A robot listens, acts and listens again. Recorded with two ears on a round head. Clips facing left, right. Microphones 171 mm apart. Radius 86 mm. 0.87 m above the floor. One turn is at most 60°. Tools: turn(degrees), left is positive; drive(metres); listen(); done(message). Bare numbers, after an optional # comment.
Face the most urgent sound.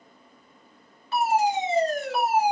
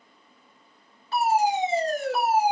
# The fire alarm: about 30° right or 150° right.
turn(-30)
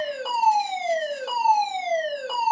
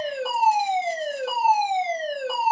done("Found it: a fire alarm, straight ahead, 2 to 4 m away.")